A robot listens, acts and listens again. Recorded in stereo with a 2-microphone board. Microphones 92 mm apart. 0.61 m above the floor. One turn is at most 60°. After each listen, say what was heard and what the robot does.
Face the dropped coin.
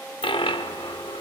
The dropped coin: about 65° left or 115° left. Turn 60° left.
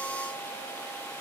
Keep listening.
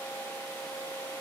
I heard a dropped coin, but can't make it out now. It was about 5° left or 55° left.